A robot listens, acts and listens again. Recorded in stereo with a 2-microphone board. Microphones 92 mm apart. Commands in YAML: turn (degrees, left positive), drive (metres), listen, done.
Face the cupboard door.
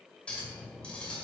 listen: true
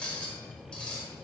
listen: true
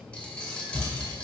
turn: -55
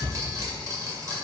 turn: -70
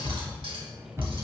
turn: -30
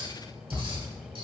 turn: -20
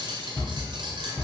done: "Facing the cupboard door."